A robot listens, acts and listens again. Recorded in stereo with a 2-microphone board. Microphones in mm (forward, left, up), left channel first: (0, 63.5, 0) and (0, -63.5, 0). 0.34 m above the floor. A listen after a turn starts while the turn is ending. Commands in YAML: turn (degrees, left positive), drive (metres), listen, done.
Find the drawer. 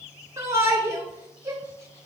listen: true
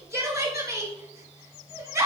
listen: true
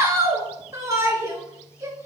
done: "I can't make out a drawer, only a shout."